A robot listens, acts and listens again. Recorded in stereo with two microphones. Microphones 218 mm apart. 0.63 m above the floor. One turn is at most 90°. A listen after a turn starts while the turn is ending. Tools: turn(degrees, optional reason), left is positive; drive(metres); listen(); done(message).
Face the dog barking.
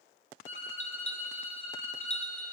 listen()
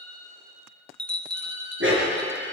turn(degrees=-65, reason="The dog barking: about 65° right or 115° right.")
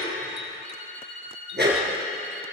turn(degrees=-50, reason="So it is at 50° right.")
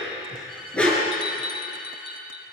done("Found it: a dog barking, straight ahead.")